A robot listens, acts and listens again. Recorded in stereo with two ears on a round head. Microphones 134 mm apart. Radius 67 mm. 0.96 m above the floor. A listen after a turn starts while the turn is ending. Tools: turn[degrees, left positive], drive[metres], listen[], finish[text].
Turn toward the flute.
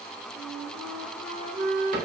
Thought: The flute: about 50° right or 130° right.
Action: turn[-50]
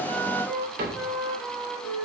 Action: finish[Facing the flute, 2 to 4 m away.]